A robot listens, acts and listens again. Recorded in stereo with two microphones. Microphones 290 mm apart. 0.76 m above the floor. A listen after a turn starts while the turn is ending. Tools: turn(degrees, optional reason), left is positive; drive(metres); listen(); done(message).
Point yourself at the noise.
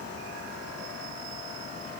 listen()
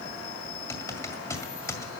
turn(degrees=30)
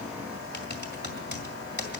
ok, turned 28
turn(degrees=140, reason="So it is at 140° left.")
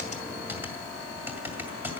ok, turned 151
done("Found it: typing on a keyboard, straight ahead.")